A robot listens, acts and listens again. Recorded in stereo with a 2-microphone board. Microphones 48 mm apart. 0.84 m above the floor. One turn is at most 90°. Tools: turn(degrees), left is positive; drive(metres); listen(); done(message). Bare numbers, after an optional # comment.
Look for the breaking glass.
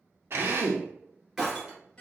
turn(-30)
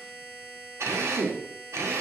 listen()
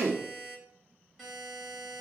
done("I heard breaking glass, but can't make it out now. It was about 20° left or 140° right.")